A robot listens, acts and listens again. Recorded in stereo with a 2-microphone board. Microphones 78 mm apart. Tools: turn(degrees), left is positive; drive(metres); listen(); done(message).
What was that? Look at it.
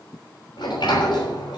turn(degrees=70)
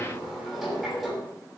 done("Facing the sliding door.")